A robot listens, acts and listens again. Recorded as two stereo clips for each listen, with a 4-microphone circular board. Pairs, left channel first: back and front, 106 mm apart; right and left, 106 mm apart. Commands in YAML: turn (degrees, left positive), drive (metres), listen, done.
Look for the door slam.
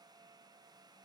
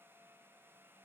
listen: true
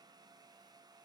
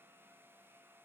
listen: true
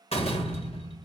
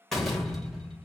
turn: -175
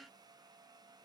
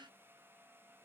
done: "I heard a door slam from this way, but can't make it out now."